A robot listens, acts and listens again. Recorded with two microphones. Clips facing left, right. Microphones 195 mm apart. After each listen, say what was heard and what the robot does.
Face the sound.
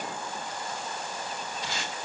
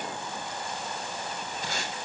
The tape being pulled: about 50° right or 130° right. Turn 50° right.
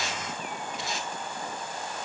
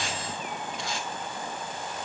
Facing the tape being pulled, 2 to 4 m away.